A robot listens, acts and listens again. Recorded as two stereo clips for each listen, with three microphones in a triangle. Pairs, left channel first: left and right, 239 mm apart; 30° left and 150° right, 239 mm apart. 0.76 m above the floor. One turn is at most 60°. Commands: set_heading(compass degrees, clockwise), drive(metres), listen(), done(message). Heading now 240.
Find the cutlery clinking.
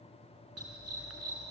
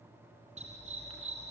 listen()
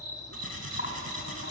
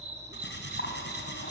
set_heading(180)
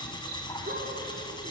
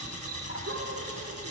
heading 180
set_heading(160)
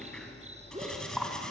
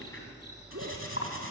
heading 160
done("Found it: cutlery clinking, straight ahead.")